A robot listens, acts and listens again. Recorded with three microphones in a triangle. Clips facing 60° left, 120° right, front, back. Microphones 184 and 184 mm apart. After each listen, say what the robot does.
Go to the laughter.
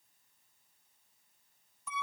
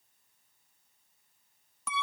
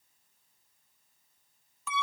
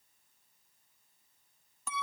Keep listening.
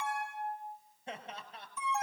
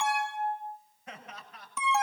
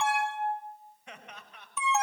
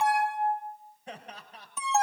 Turn 120° left.
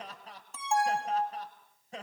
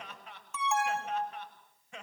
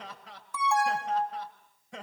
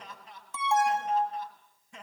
Drive 1.0 m forward.
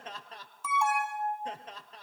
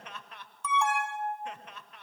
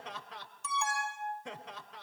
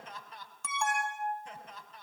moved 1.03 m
Drive 1.0 m forward.
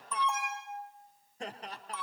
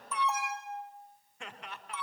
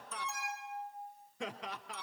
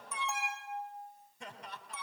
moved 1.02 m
Drive 1.0 m forward.
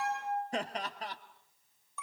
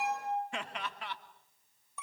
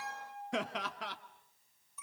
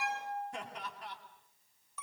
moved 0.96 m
Drive 1.0 m forward.
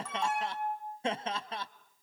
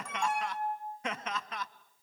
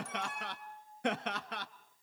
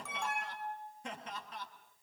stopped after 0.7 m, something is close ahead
I am next to the laughter.